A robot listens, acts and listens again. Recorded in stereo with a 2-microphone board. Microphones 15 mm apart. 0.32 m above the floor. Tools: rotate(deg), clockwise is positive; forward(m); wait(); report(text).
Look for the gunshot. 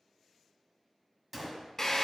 rotate(30)
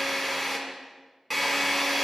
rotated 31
wait()
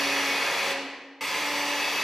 report("I heard a gunshot, but can't make it out now. It was about 5° left or 120° right.")